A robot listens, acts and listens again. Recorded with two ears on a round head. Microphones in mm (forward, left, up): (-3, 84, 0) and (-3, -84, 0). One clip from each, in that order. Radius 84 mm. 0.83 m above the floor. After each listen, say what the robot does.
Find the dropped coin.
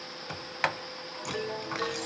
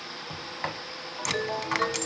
Turn 50° right.
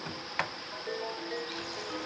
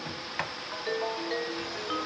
Keep listening.
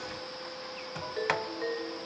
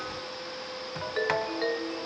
I heard a dropped coin, but can't make it out now. It was about straight ahead or 80° right.